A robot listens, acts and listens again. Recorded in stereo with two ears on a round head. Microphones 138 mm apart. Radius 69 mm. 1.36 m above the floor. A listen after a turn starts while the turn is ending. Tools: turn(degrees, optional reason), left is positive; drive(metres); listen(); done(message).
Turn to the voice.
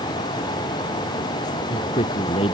turn(degrees=35, reason="The man speaking: about 35° left or 145° left.")
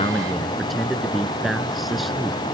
done("Found it: a man speaking, straight ahead.")